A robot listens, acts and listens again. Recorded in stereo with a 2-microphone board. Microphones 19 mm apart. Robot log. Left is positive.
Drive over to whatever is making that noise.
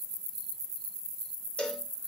note: The cowbell: about 60° left or 120° left.
cmd yaw +60
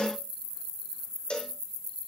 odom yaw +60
note: So it is at 60° left.
cmd yaw +60
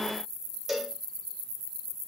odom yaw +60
note: The cowbell is now 10° right.
cmd yaw -10
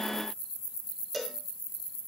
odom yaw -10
cmd fwd 1.0
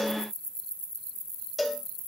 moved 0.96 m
cmd fwd 1.0
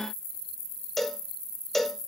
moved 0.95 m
note: The cowbell is now 10° left.
cmd yaw +10
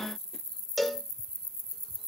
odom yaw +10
cmd fwd 1.0
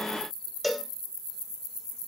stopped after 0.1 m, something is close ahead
end: I am next to the cowbell.